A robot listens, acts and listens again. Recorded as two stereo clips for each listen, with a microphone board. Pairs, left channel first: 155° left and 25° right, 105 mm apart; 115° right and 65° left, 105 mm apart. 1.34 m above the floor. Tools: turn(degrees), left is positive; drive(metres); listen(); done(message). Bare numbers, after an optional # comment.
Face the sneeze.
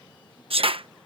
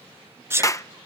done("Found it: a sneeze, straight ahead.")